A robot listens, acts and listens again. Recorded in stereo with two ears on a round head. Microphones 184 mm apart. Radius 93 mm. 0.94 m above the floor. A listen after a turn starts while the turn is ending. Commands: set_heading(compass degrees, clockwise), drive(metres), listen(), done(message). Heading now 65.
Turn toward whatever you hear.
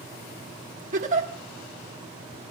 set_heading(105)
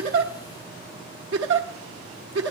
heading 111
set_heading(201)
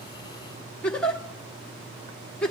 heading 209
done("Found it: a giggle, straight ahead.")